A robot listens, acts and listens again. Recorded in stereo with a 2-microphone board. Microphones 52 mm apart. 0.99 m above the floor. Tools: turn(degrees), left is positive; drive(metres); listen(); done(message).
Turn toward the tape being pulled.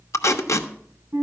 turn(degrees=70)
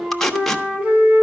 done("Found it: tape being pulled, straight ahead.")